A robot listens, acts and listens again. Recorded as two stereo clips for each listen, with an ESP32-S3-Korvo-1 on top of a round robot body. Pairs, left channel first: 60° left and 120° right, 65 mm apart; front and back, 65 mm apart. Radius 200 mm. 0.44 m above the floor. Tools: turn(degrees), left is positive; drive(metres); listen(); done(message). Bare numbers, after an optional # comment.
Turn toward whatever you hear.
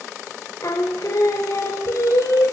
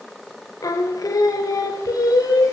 # The singing: 25° left.
turn(25)
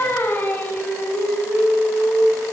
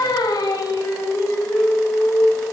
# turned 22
done("Facing the singing.")